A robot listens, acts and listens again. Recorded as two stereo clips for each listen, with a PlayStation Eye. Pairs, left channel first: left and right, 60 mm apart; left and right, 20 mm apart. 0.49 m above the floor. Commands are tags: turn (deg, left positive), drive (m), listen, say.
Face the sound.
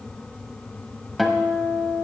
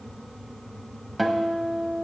<turn deg="30"/>
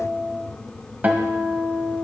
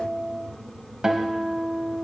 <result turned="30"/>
<turn deg="-30"/>
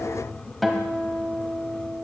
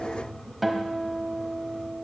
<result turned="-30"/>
<say>Found it: a guitar, straight ahead.</say>